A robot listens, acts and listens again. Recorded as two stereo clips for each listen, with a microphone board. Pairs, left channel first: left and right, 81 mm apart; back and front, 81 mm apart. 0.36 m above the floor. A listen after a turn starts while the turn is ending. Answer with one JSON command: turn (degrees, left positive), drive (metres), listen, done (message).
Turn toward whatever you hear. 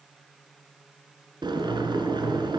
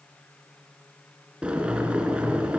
{"turn": -75}
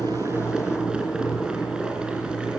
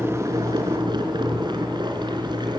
{"turn": -10}
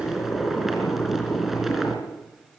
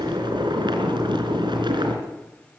{"done": "Facing the boiling."}